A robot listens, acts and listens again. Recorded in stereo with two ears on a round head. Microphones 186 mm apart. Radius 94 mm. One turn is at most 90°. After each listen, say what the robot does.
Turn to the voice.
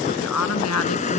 Turn 90° left.
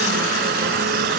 Keep listening.
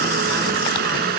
Keep listening.
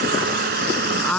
Found it: a woman speaking, straight ahead.